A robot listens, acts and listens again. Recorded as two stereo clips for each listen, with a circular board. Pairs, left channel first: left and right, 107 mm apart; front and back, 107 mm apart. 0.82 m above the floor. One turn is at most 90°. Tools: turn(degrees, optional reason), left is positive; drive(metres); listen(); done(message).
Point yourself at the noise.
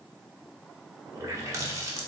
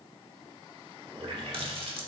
turn(degrees=-90, reason="The running tap: 150° right.")
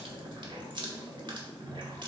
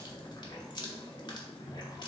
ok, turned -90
turn(degrees=-50, reason="The running tap is now 50° right.")
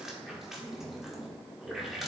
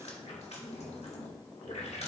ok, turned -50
done("Facing the running tap, 1 to 2 m away.")